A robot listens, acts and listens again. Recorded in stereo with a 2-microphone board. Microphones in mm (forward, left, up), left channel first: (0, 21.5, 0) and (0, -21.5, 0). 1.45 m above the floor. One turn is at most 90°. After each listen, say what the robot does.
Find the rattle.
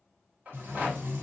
Turn 40° right.
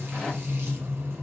Keep listening.
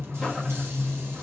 Keep listening.
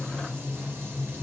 I heard a rattle, but can't make it out now. It was about straight ahead or 100° right.